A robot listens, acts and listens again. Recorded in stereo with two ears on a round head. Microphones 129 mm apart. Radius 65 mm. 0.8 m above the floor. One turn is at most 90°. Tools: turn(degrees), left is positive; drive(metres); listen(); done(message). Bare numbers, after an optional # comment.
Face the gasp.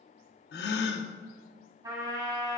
turn(90)
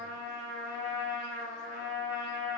done("Facing where the gasp came from. I can't hear it now.")